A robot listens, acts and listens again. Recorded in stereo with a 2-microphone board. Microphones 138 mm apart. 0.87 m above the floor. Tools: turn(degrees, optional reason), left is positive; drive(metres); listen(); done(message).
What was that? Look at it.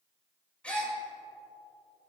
turn(degrees=30)
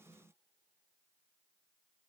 listen()
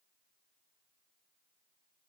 done("I heard a gasp, but can't make it out now. It was about 20° right or 140° left.")